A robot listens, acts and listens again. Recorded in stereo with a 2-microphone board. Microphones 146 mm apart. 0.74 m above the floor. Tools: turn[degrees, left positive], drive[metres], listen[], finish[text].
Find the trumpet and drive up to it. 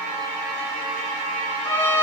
Action: turn[30]
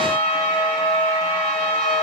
Thought: So it is at 140° left.
Action: turn[140]
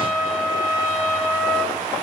Thought: The trumpet is now 15° left.
Action: turn[15]
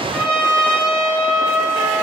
Action: drive[1.0]
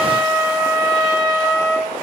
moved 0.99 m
Action: drive[1.0]
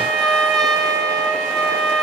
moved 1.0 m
Action: drive[1.0]
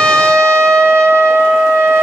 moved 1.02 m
Action: drive[1.0]
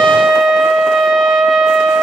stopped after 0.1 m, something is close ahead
Action: finish[Arrived at the trumpet, straight ahead.]